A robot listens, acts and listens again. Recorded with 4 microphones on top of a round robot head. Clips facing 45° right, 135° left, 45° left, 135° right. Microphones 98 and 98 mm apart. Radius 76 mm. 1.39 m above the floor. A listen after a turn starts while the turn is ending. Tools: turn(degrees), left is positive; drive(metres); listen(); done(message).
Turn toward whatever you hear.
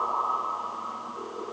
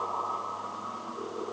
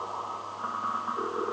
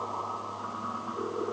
listen()
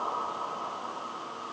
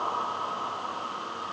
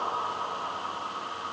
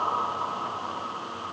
listen()
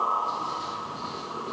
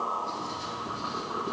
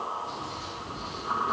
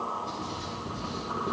turn(degrees=-130)
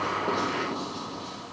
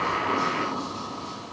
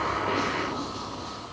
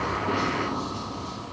done("Facing the writing.")